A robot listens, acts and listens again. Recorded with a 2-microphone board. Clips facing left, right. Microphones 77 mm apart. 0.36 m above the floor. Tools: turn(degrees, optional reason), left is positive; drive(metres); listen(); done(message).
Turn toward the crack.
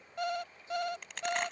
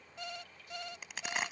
turn(degrees=-30)
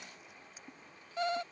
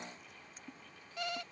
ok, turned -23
listen()
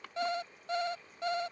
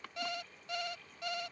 done("I heard a crack, but can't make it out now. It was about 15° left or 150° right.")